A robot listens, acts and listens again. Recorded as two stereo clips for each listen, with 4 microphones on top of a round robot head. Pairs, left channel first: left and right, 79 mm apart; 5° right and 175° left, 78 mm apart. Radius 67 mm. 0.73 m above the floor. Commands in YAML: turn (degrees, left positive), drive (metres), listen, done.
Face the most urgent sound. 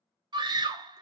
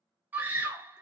turn: -115
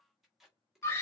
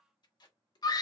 turn: 30
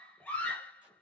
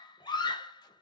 turn: 15
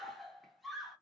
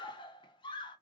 done: "Facing the scream."